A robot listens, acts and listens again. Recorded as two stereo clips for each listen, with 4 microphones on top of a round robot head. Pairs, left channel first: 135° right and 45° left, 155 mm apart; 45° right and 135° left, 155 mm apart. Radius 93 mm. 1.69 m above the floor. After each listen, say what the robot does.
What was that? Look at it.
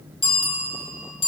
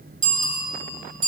Turn 170° left.
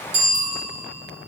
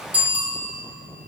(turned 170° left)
Turn 55° left.
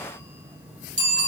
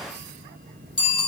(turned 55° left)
Turn 10° left.
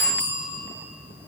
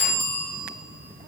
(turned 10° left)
Found it: a bicycle bell, straight ahead, 2 to 4 m away.